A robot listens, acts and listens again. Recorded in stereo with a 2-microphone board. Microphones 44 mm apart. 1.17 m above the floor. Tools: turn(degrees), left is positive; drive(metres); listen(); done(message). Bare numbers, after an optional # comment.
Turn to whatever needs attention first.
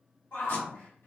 # The shout: about 60° left or 120° left.
turn(60)
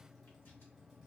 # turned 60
listen()
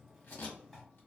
listen()
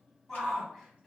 done("Found it: a shout, straight ahead.")